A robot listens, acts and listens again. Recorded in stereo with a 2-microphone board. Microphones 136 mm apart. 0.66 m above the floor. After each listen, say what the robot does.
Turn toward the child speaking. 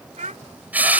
Turn 70° right.
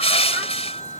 Keep listening.
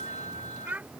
Turn 15° right.
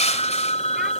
Keep listening.
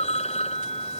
Keep listening.
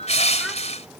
I heard a child speaking from this way, but can't make it out now.